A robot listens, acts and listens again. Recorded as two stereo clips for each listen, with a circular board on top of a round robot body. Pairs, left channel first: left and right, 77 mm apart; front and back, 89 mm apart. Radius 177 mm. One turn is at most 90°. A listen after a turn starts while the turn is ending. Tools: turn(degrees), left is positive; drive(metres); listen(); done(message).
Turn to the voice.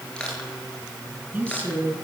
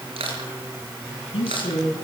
turn(degrees=-25)
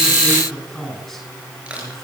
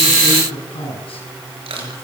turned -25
done("Facing the man speaking, over 4 m away.")